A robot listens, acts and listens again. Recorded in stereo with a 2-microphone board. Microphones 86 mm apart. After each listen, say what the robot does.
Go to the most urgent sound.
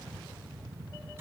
Keep listening.
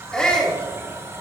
Turn 30° left.
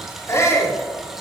Turn 140° left.
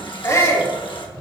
Turn 40° left.
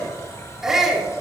Drive 1.0 m forward.
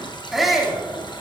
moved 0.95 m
Drive 1.0 m forward.
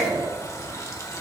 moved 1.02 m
Drive 1.0 m forward.
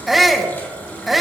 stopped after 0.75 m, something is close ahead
Arrived at the shout, straight ahead.